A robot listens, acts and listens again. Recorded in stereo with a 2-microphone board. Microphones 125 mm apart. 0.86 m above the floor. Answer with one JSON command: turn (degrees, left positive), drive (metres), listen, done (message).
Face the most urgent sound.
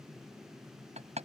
{"listen": true}
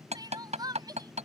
{"turn": -35}
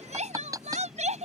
{"turn": -110}
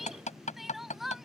{"done": "Found it: crying, straight ahead."}